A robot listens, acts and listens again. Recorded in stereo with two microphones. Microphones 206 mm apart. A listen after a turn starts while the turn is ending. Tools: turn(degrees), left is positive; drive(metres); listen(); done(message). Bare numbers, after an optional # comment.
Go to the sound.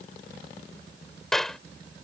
turn(30)
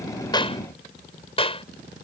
# So it is at 150° left.
turn(150)
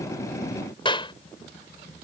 # The clap is now 25° left.
turn(25)
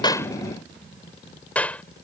drive(1.0)
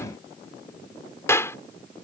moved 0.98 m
# The clap is now 15° left.
turn(15)
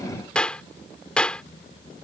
drive(1.0)
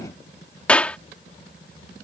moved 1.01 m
drive(1.0)
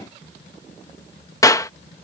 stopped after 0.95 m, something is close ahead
# The clap is now 20° left.
turn(20)
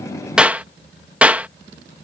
# The clap is now 10° right.
turn(-10)
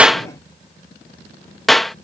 done("I am next to the clap.")